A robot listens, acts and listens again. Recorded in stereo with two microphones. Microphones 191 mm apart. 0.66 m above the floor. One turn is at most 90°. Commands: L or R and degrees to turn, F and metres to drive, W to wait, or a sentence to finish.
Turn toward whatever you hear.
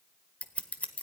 L30
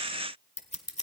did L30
L90
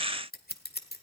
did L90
L55
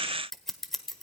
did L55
Facing the scissors, 1 to 2 m away.